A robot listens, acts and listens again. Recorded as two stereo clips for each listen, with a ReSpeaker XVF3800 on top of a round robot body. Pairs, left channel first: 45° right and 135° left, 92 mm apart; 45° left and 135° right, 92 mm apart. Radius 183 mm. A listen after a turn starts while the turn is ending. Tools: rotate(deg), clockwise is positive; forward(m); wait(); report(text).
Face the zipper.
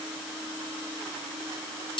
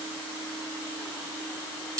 wait()
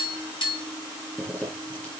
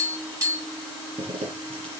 rotate(120)
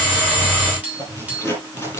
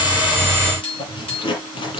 rotate(-20)
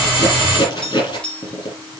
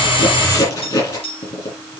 report("Facing the zipper, over 4 m away.")